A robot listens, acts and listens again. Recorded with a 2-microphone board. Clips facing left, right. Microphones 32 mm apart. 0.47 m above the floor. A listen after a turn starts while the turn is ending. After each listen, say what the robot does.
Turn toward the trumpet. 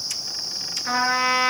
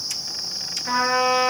Turn 25° left.
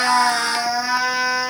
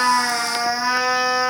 Found it: a trumpet, straight ahead.